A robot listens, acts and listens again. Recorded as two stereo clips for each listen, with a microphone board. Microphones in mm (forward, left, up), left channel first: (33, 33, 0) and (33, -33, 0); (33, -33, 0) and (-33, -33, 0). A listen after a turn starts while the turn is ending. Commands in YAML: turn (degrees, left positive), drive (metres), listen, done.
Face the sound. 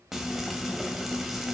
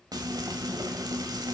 turn: -175
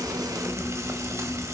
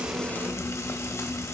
turn: -45
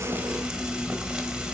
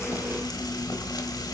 turn: -10
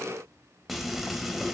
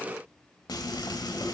done: "Found it: frying, straight ahead, under 1 m away."